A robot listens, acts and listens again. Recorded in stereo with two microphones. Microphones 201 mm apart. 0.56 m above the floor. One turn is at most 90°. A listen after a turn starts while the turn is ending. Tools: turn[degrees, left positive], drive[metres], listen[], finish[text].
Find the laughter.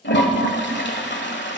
Action: listen[]
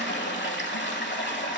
Action: listen[]
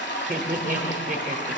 Thought: The laughter: about 45° right or 135° right.
Action: turn[-45]
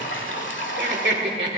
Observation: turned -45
Thought: So it is at 85° right.
Action: turn[-85]
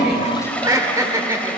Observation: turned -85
Thought: The laughter is now 20° right.
Action: turn[-20]
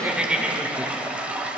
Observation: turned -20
Action: finish[Found it: laughter, straight ahead, 1 to 2 m away.]